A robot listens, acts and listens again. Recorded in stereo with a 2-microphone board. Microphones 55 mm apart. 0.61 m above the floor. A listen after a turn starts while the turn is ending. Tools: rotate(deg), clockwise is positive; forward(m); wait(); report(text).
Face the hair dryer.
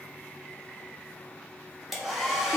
rotate(30)
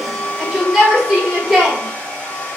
rotate(-30)
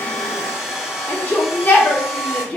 rotate(10)
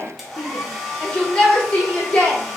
report("Found it: a hair dryer, straight ahead, 1 to 2 m away.")